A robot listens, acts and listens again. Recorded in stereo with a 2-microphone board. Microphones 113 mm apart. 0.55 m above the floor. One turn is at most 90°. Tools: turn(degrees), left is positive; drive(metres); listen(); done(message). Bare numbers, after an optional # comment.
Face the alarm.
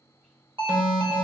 # The alarm: about 55° right or 125° right.
turn(-55)
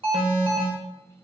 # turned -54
# So it is at 65° right.
turn(-65)
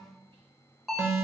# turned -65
done("Found it: an alarm, straight ahead, 1 to 2 m away.")